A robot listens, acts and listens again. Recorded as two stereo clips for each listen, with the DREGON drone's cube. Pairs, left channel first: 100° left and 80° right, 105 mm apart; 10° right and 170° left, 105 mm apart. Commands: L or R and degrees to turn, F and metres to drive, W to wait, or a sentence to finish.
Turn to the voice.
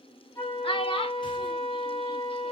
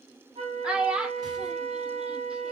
L90
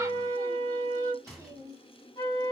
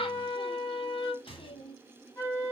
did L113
R25
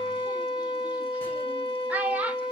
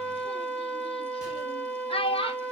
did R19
Facing the child speaking.